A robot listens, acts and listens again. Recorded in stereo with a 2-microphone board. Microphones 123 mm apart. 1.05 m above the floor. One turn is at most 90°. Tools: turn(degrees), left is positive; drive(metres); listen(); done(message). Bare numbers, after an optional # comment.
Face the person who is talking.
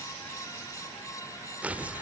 listen()
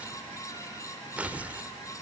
listen()
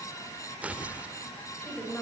turn(30)
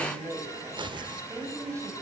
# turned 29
# So it is at 25° right.
turn(-25)
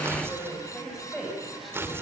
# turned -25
done("Facing the woman speaking, over 4 m away.")